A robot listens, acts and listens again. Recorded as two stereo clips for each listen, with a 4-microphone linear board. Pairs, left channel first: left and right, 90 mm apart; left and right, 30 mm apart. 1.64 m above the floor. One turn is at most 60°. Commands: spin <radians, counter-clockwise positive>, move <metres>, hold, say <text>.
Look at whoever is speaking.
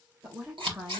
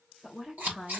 spin -0.61
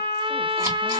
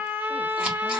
hold
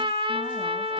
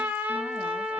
hold
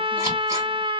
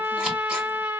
say I heard a woman speaking, but can't make it out now. It was about straight ahead or 110° right.